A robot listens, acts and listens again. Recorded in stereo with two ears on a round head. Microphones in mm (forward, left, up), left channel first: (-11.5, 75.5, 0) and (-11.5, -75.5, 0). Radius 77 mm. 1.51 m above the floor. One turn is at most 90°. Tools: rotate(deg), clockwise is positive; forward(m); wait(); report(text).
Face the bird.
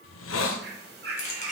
rotate(60)
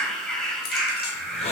report("Found it: a bird, straight ahead.")